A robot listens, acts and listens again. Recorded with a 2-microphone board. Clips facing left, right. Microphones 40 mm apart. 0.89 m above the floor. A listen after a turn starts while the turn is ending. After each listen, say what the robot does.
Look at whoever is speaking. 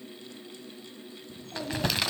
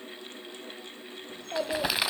Turn 90° right.
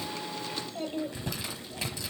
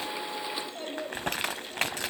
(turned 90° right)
Found it: a child speaking, straight ahead, 2 to 4 m away.